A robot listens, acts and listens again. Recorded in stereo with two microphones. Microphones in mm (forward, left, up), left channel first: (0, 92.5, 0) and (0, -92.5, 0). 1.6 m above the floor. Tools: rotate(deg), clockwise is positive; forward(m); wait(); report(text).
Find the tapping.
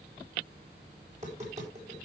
rotate(40)
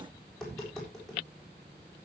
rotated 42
report("Found it: tapping, straight ahead, over 4 m away.")